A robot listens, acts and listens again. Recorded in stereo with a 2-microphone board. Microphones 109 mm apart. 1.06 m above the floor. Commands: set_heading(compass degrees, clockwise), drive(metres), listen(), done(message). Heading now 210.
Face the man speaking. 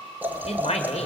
set_heading(135)
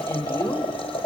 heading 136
set_heading(106)
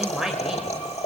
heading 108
done("Facing the man speaking, over 4 m away.")